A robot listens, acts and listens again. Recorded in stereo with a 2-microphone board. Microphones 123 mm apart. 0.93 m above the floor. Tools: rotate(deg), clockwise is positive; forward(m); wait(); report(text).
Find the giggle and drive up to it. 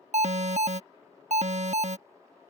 wait()
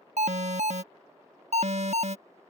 wait()
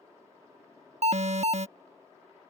report("I can't make out a giggle to turn to.")